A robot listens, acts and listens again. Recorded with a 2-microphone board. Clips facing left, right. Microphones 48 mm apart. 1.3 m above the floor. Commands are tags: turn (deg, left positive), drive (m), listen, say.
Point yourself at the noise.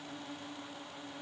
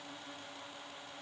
<listen/>
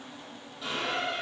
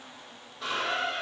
<turn deg="-65"/>
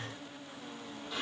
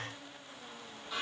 <turn deg="-10"/>
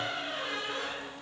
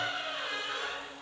<say>Facing the squeak.</say>